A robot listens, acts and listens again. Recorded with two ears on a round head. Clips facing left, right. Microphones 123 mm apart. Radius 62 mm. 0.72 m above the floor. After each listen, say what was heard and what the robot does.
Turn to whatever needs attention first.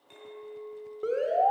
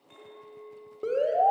Turn 30° right.
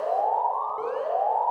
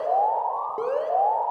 So it is at 140° right. Turn 140° right.
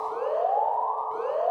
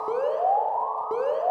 The alarm is now 70° right. Turn 70° right.
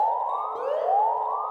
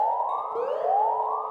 Facing the alarm.